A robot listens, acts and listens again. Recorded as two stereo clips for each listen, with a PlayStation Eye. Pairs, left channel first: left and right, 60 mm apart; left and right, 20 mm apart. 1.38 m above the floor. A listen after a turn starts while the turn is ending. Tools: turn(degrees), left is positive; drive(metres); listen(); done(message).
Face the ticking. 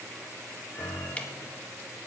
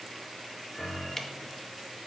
turn(degrees=20)
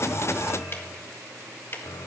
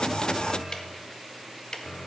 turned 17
turn(degrees=140)
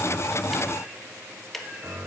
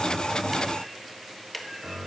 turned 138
done("Facing the ticking, 1 to 2 m away.")